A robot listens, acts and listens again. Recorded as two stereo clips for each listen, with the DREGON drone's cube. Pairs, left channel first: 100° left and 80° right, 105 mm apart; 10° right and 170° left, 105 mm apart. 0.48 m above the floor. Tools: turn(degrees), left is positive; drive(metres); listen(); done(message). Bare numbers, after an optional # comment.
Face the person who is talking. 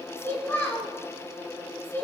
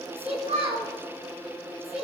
# The child speaking: 170° left.
turn(170)
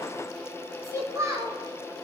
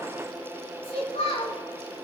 # The child speaking is now 20° right.
turn(-20)
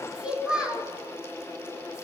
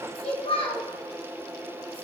done("Facing the child speaking.")